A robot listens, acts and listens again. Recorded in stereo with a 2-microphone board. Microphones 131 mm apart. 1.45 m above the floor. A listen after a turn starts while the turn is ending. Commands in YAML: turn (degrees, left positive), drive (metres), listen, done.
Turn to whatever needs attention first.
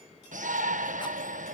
turn: -90
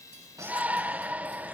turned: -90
turn: -10
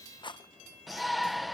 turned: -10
done: "Facing the shout."